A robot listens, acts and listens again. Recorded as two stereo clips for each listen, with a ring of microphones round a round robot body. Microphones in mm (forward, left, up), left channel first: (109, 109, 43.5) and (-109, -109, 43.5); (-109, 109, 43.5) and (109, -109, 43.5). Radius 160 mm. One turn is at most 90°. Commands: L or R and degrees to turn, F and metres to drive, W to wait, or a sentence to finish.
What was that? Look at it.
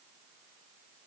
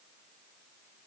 W
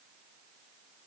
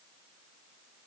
W
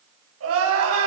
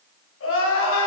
L90
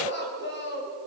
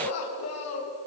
L90
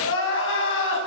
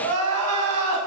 Facing the crying, over 4 m away.